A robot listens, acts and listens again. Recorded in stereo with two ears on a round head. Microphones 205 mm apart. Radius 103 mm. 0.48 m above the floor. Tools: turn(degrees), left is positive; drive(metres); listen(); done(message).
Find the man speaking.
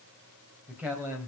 turn(degrees=-30)
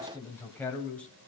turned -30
done("Facing the man speaking, 2 to 4 m away.")